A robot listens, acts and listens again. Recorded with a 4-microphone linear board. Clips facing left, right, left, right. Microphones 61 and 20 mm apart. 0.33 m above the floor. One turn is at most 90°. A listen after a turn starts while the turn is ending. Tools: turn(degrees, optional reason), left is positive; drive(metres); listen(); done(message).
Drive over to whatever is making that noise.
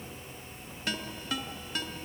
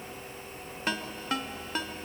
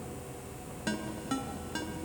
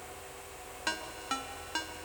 turn(degrees=-40, reason="The ringtone: about 40° right or 140° right.")
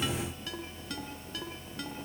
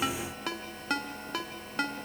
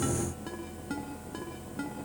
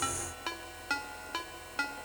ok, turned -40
turn(degrees=-90, reason="So it is at 95° right.")
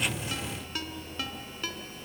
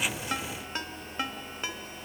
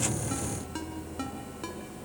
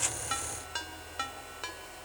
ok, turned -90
turn(degrees=-25, reason="The ringtone is now 25° right.")
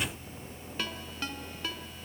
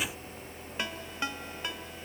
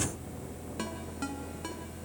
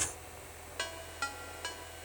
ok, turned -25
turn(degrees=-20, reason="The ringtone is now 20° right.")
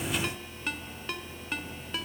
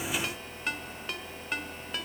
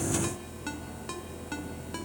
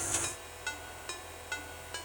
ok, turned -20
drive(metres=1.0)
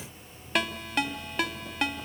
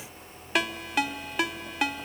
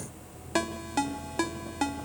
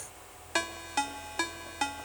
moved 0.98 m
drive(metres=1.0)
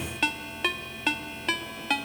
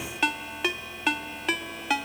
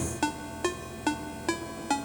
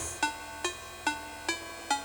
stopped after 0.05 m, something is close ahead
done("Arrived at the ringtone, straight ahead.")